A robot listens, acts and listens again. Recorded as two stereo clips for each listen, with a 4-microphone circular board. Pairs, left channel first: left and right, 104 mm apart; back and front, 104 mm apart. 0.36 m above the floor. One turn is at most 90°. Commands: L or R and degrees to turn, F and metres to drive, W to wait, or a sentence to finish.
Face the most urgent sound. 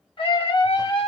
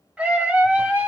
L75
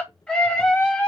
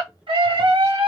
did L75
L10
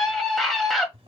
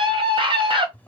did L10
Facing the scream.